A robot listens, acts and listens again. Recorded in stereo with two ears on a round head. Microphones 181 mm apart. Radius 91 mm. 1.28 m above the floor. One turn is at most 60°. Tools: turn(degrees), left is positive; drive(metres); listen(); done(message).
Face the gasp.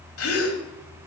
turn(degrees=60)
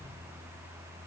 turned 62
turn(degrees=30)
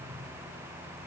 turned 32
done("Facing where the gasp came from. I can't hear it now.")